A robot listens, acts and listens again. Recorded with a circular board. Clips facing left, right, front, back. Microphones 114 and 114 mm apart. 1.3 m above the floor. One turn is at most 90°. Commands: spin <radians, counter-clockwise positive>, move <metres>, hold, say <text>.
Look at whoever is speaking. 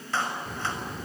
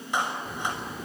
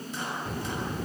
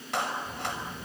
say Found it: a child speaking, straight ahead, 1 to 2 m away.